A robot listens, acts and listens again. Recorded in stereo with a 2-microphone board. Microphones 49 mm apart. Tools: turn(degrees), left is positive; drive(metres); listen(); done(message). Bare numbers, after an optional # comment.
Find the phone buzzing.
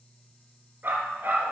listen()
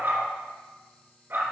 listen()
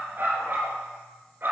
done("I can't make out a phone buzzing to turn to.")